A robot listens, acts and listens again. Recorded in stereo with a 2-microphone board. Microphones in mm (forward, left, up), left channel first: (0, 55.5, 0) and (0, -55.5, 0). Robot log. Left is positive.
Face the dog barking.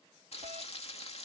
cmd idle
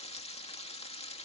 cmd idle
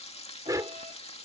note: The dog barking: about 30° right or 150° right.
cmd yaw -30
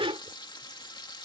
note: So it is at 115° right.
cmd yaw -115
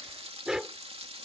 end: Found it: a dog barking, straight ahead.